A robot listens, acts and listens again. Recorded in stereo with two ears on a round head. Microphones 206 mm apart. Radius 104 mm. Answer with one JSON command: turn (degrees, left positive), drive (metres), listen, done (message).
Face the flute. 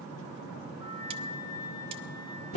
{"turn": 75}
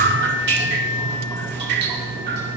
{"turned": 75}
{"listen": true}
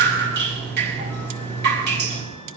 {"listen": true}
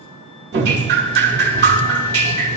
{"done": "I heard a flute, but can't make it out now. It was about straight ahead or 30° left."}